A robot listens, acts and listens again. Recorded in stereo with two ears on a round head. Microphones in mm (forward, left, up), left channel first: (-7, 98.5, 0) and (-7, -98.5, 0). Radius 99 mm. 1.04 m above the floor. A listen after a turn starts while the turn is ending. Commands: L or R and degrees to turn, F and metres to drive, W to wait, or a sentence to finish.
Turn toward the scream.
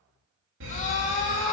L35
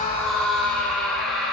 Facing the scream.